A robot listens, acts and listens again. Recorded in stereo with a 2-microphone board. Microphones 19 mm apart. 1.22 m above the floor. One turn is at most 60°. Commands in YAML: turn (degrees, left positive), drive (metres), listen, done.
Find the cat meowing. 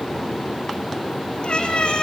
turn: 60
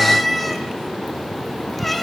done: "Found it: a cat meowing, straight ahead, over 4 m away."